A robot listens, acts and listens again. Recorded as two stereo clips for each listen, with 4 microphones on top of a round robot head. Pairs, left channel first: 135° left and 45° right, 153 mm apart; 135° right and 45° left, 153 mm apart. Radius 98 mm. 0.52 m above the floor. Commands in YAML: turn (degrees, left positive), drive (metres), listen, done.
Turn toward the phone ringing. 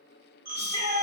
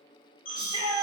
turn: -80
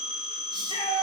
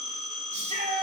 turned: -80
done: "Facing the phone ringing, 2 to 4 m away."